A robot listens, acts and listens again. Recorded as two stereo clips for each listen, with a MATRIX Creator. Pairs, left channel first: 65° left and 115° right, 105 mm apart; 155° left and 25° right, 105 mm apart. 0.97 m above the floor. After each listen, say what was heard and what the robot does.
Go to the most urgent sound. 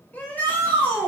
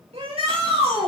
Drive 1.0 m forward.
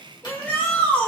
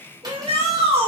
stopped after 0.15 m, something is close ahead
Something is in my way. I am facing the shout but have not reached it.